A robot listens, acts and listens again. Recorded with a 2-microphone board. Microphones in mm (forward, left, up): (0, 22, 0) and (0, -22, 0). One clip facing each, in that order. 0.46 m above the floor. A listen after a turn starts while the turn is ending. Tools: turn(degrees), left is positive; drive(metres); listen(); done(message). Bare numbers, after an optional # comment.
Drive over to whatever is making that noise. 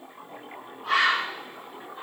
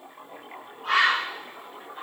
# The bird: about 50° right or 130° right.
turn(-50)
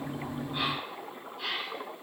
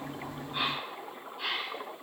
drive(1.0)
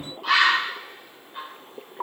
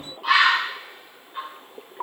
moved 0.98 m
# The bird is now 10° right.
turn(-10)
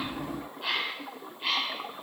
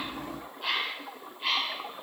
drive(1.0)
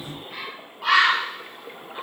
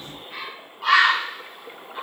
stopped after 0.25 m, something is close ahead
done("Arrived at the bird, straight ahead.")